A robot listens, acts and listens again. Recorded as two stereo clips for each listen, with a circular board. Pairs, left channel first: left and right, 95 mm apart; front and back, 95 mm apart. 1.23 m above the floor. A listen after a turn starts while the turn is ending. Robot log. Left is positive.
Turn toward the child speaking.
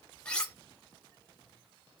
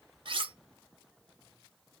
cmd idle
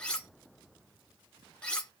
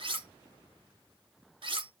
cmd idle
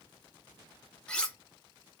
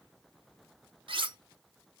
end: I can't make out a child speaking, only cutlery clinking.